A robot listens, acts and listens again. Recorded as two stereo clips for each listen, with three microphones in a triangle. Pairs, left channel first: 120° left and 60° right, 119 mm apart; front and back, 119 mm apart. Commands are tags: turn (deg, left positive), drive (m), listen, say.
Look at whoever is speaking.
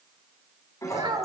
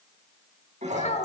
<turn deg="-10"/>
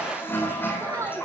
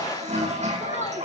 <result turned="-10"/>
<say>Found it: a child speaking, straight ahead, 2 to 4 m away.</say>